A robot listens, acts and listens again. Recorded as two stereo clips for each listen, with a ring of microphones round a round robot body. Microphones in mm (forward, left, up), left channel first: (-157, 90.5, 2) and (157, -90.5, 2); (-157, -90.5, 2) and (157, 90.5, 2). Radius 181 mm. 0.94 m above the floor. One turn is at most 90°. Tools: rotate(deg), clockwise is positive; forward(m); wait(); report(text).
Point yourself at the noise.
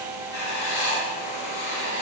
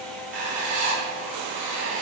rotate(-90)
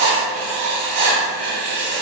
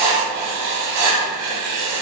rotate(15)
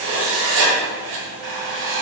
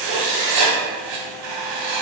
report("Facing the writing, 1 to 2 m away.")